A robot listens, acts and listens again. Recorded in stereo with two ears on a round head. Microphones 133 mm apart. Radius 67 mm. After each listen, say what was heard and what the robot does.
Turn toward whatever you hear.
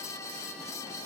Keep listening.
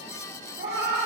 Turn 90° right.
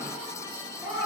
So it is at 20° right. Turn 20° right.
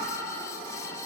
Found it: a cat meowing, straight ahead.